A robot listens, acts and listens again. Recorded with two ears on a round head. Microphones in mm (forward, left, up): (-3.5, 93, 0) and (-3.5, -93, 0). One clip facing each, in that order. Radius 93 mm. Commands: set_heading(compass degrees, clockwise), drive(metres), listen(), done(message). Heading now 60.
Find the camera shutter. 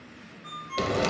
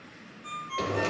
listen()
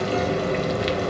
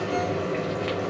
listen()
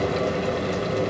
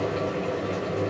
done("I can't make out a camera shutter, only a ringtone and frying.")